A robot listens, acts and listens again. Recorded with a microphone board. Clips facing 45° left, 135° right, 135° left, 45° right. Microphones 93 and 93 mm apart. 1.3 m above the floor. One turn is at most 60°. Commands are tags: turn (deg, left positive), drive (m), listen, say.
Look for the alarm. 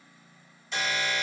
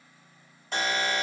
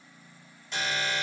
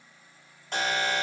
<turn deg="-60"/>
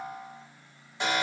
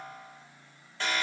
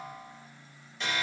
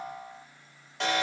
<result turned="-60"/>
<turn deg="-30"/>
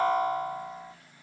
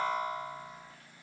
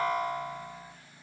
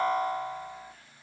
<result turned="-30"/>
<say>Facing the alarm.</say>